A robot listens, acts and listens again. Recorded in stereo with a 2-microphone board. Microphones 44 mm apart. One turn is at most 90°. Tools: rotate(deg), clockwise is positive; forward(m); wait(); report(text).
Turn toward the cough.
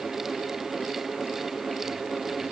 wait()
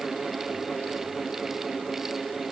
wait()
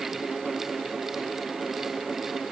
report("I can't make out a cough to turn to.")